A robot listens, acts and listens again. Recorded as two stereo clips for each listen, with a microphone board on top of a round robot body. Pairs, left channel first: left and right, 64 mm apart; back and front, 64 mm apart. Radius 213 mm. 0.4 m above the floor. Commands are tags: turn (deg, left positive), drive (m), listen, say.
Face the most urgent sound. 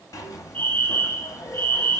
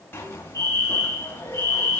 <turn deg="25"/>
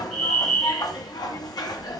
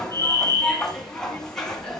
<say>Facing the fire alarm, over 4 m away.</say>